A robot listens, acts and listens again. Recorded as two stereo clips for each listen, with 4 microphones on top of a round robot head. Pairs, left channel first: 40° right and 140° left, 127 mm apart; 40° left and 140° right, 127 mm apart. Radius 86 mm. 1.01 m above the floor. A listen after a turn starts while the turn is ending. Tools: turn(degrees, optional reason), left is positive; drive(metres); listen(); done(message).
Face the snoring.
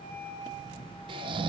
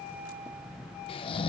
turn(degrees=90, reason="The snoring: 90° left.")
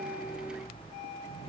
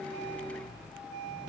listen()
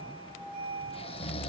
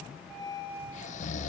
turn(degrees=10, reason="The snoring is now 10° left.")
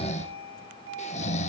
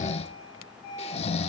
done("Facing the snoring.")